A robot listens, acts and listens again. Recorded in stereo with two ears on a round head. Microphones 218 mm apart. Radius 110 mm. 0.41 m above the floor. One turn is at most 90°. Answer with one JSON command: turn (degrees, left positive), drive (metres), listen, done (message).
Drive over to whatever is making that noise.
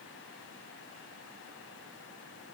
{"listen": true}
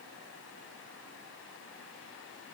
{"listen": true}
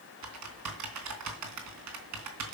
{"turn": -90}
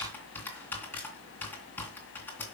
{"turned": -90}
{"turn": 10}
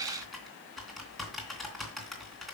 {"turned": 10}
{"drive": 1.0}
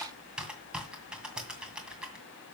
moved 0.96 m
{"drive": 1.0}
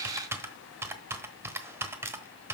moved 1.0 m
{"turn": -15}
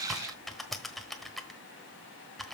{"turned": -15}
{"drive": 1.0}
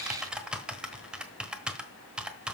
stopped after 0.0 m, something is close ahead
{"done": "I am next to the typing on a keyboard."}